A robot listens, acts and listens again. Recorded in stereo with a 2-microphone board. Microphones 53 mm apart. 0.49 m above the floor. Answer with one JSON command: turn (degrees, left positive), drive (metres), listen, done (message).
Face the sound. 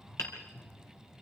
{"turn": 60}
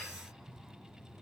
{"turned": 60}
{"listen": true}
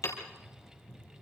{"turn": 60}
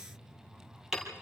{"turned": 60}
{"turn": -10}
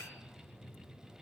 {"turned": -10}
{"listen": true}
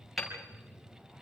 {"done": "Found it: hammering, straight ahead."}